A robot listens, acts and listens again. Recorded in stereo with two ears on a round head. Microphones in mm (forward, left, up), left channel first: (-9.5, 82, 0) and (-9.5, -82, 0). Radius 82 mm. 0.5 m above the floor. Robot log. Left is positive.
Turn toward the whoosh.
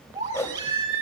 note: The whoosh: about 15° left or 165° left.
cmd yaw +15
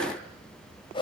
note: So it is at 150° left.
cmd yaw +150
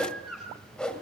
end: Facing the whoosh.